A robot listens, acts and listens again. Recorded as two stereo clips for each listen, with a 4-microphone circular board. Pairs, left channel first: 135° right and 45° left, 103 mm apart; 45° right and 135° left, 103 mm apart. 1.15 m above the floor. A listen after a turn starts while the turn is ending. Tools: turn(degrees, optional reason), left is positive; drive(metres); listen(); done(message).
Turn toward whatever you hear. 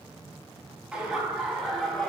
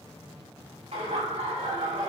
turn(degrees=135, reason="The laughter: 135° left.")
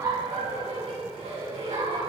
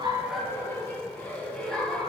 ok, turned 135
turn(degrees=40, reason="The laughter is now 40° left.")
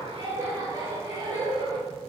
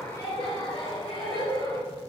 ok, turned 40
done("Found it: laughter, straight ahead, 2 to 4 m away.")